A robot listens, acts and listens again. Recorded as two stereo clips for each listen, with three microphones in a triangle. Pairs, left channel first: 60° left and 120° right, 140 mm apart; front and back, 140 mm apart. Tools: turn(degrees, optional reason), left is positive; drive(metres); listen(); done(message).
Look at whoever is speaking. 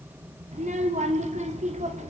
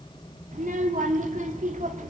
turn(degrees=-155, reason="The child speaking: 155° right.")
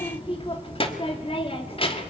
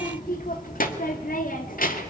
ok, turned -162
turn(degrees=10, reason="The child speaking is now 10° left.")
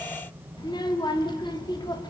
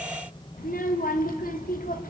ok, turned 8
done("Facing the child speaking, 2 to 4 m away.")